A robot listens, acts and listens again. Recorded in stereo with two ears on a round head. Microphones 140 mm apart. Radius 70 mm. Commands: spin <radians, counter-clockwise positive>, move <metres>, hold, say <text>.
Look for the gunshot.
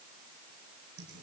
hold
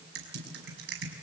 hold
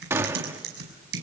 spin -0.26
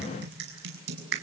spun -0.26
hold
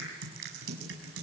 say I heard a gunshot, but can't make it out now. It was about straight ahead or 150° right.